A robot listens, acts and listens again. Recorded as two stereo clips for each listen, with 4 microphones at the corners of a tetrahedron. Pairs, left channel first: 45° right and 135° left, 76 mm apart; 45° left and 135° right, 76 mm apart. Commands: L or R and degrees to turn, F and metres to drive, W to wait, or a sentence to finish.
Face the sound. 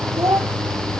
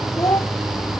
L85
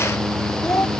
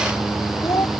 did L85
Facing the child speaking.